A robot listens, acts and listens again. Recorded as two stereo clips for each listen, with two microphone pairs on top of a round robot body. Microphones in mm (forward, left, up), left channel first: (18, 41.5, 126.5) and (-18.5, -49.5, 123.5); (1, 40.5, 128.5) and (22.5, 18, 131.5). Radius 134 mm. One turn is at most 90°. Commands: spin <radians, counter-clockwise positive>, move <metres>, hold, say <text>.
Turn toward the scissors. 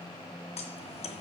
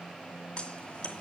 spin 1.31
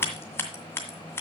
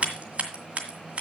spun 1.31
say Found it: scissors, straight ahead, 2 to 4 m away.